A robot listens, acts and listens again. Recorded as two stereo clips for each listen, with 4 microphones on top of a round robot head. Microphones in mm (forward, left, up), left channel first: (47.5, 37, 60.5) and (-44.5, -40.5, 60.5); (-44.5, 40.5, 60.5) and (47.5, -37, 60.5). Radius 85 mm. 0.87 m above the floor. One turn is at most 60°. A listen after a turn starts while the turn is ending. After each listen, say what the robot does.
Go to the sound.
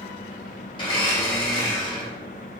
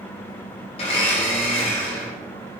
Turn 60° left.
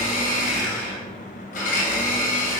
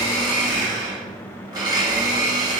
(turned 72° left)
Turn 20° left.
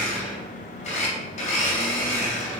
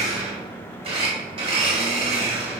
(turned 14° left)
Drive 1.0 m forward.
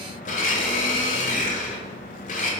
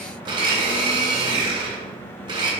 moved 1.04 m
Turn 15° left.
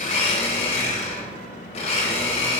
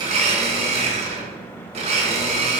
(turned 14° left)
Drive 1.0 m forward.
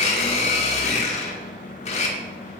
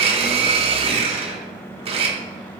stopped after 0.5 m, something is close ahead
Arrived at the blender, straight ahead.